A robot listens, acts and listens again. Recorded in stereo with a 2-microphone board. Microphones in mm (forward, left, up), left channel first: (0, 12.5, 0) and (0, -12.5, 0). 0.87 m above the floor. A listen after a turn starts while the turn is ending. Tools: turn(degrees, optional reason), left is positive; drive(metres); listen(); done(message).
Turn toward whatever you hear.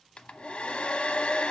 turn(degrees=60, reason="The hair dryer: about 60° left or 120° left.")
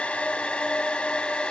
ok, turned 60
turn(degrees=60, reason="So it is at 60° left.")
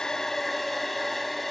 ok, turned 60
done("Facing the hair dryer, under 1 m away.")